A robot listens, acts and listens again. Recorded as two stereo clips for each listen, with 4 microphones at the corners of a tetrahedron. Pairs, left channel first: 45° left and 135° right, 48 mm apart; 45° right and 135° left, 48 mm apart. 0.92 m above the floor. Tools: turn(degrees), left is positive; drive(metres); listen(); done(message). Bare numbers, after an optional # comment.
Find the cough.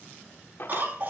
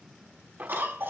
# The cough: 175° left.
turn(175)
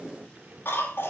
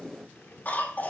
done("Facing the cough, 2 to 4 m away.")